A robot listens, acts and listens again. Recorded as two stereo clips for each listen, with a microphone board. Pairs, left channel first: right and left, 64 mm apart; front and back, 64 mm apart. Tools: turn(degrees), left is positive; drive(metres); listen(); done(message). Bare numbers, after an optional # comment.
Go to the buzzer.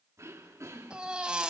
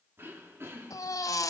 listen()
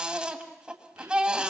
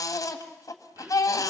listen()
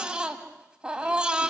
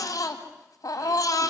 done("I can't make out a buzzer to turn to.")